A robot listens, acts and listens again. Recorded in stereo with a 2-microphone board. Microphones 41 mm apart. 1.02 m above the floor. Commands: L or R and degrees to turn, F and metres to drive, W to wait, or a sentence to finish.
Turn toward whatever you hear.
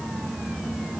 W
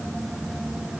W
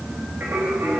R55
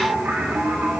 R65
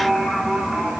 R25
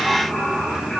Facing the singing.